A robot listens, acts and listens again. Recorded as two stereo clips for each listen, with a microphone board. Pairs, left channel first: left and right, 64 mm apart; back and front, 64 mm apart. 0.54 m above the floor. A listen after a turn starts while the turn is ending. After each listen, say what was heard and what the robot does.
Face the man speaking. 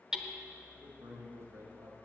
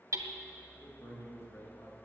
The man speaking: 135° right. Turn 135° right.
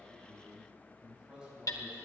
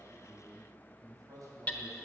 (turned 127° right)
The man speaking is now 10° right. Turn 10° right.
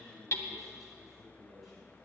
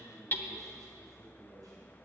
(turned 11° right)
Found it: a man speaking, straight ahead.